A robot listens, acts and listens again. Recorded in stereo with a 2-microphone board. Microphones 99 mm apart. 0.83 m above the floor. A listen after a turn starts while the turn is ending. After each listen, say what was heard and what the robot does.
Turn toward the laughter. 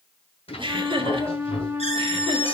The laughter: about 60° right or 120° right. Turn 60° right.
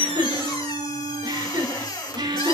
So it is at 50° right. Turn 50° right.
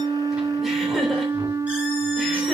Keep listening.
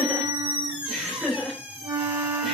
Found it: laughter, straight ahead.